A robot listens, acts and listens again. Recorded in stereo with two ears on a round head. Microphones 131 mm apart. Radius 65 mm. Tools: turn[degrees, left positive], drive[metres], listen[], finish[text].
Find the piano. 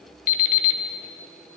Action: listen[]
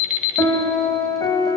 Thought: The piano: about 20° left or 160° left.
Action: turn[20]
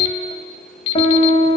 Thought: So it is at 140° left.
Action: turn[140]
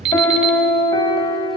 Thought: The piano is now 25° left.
Action: turn[25]
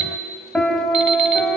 Action: finish[Facing the piano.]